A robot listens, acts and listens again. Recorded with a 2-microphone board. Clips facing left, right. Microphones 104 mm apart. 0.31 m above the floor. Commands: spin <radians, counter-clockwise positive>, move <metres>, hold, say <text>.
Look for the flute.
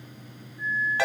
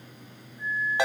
spin -0.96
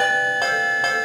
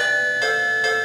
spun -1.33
hold
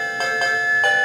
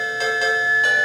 hold
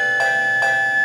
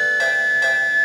say I heard a flute, but can't make it out now. It was about 25° left or 50° right.